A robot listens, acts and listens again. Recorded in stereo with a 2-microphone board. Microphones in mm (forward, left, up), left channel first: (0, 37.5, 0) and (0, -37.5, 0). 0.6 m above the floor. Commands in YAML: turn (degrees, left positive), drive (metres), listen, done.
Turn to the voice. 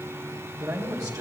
turn: -55
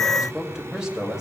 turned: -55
done: "Facing the man speaking, 2 to 4 m away."